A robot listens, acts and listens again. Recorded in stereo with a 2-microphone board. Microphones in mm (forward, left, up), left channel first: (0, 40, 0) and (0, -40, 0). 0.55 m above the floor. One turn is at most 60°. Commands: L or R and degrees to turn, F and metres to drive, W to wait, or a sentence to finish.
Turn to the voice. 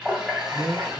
R55
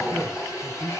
R60
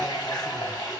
W
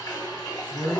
Found it: a man speaking, straight ahead, 1 to 2 m away.